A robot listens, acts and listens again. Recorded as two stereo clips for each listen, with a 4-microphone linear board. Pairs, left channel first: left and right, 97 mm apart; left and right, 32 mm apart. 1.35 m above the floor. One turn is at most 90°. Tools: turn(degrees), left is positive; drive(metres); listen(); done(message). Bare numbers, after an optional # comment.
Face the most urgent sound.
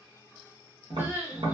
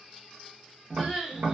# The crying: about 25° right or 155° right.
turn(-25)
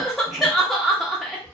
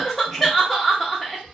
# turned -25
done("Found it: crying, straight ahead.")